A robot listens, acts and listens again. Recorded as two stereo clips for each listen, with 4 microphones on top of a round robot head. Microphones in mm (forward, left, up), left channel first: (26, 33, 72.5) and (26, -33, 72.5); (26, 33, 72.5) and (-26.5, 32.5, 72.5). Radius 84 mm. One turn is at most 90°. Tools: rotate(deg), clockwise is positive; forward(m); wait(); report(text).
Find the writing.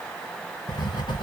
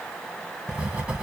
rotate(-90)
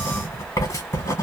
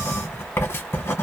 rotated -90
rotate(-50)
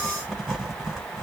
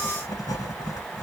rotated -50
report("Facing the writing.")